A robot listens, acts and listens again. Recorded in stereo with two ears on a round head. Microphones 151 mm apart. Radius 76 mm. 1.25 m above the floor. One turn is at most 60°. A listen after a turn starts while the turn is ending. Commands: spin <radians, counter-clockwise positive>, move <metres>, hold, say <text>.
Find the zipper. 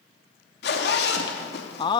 spin 1.05
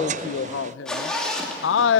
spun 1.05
say Found it: a zipper, straight ahead.